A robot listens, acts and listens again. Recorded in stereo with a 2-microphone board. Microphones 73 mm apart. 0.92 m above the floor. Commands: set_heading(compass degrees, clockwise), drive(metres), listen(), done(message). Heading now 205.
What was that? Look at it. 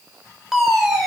set_heading(235)
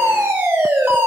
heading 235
set_heading(20)
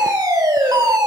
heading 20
set_heading(85)
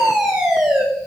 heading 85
set_heading(95)
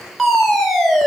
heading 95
done("Found it: a fire alarm, straight ahead.")